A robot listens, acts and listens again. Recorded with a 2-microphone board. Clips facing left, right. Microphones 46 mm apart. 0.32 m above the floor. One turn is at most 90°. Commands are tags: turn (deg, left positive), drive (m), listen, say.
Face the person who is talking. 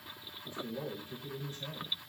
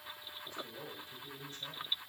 <turn deg="25"/>
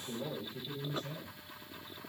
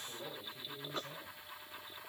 <say>Found it: a man speaking, straight ahead.</say>